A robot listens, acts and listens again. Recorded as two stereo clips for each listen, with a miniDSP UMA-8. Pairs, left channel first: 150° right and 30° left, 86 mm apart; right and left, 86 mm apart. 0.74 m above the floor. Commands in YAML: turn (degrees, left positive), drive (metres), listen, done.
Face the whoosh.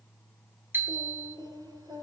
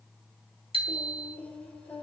listen: true
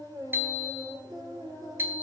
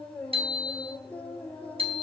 listen: true
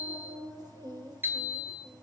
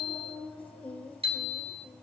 done: "I can't make out a whoosh to turn to."